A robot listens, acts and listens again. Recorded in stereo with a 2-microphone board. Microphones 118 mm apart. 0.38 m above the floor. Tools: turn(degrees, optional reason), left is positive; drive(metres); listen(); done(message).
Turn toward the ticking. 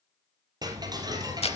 turn(degrees=-35, reason="The ticking: about 35° right or 145° right.")
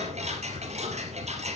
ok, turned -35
turn(degrees=-110, reason="So it is at 110° right.")
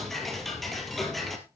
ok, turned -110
done("Found it: ticking, straight ahead, 2 to 4 m away.")